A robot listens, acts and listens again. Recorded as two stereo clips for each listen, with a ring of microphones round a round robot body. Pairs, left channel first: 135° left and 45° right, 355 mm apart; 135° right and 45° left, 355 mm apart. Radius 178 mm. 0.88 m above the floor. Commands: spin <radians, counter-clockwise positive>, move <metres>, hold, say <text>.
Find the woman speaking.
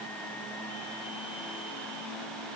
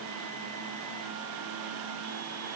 hold
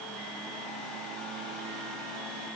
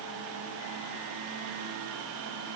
hold
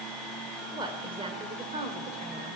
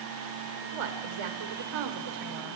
spin 0.52
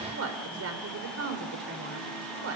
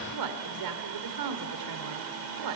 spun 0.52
spin 0.17
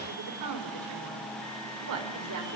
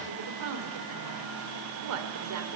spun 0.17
say Facing the woman speaking, 2 to 4 m away.